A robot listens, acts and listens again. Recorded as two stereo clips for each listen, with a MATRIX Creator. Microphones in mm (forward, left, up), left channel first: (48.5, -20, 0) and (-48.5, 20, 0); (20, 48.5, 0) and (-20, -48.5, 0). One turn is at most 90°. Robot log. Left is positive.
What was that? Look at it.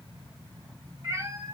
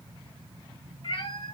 note: The cat meowing: 100° left.
cmd yaw +90
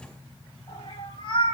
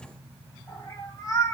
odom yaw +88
note: The cat meowing is now 15° left.
cmd yaw +15
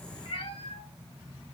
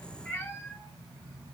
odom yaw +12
end: Facing the cat meowing, 2 to 4 m away.